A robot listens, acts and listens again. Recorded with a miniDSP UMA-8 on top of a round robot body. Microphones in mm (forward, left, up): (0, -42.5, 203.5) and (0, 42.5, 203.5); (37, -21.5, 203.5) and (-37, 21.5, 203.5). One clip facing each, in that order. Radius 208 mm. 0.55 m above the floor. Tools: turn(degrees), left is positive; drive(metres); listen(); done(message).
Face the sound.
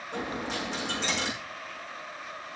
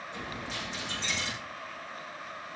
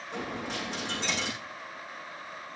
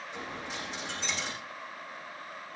turn(degrees=-60)
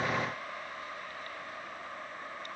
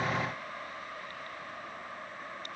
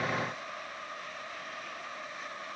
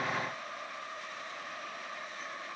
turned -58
done("I heard a dropped coin from this way, but can't make it out now.")